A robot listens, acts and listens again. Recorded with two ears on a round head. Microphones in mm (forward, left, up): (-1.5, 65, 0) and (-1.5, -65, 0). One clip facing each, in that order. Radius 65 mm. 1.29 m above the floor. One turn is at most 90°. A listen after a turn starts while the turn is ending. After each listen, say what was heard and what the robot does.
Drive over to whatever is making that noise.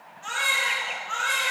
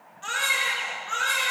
The baby crying: about 60° right or 120° right. Turn 60° right.
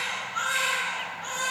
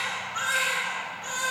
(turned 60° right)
So it is at 65° right. Turn 65° right.
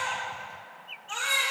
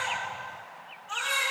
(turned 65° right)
The baby crying is now 10° left. Turn 10° left.
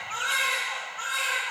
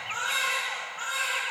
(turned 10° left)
Drive 1.0 m forward.
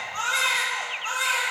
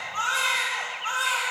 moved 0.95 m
The baby crying is now 10° left. Turn 10° left.
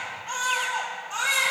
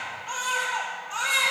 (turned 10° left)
Drive 1.0 m forward.
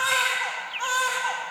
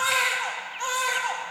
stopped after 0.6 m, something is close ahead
The baby crying is now 10° right. Turn 10° right.
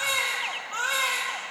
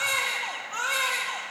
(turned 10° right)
Arrived at the baby crying, straight ahead.